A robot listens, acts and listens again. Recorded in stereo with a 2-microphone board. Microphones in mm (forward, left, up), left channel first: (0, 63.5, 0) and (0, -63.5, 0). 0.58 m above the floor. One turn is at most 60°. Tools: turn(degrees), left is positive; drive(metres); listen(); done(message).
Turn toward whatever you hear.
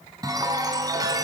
turn(degrees=-30)
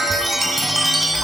done("Facing the chime.")